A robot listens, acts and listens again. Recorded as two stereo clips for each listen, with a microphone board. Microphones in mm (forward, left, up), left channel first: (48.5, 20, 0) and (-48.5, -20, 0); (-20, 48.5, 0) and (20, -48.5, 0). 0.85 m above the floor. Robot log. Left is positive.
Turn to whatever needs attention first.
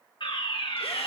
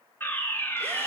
note: The fire alarm: 45° left.
cmd yaw +45
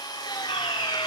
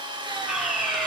note: The fire alarm is now 20° left.
cmd yaw +20
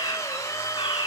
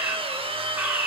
end: Facing the fire alarm, 2 to 4 m away.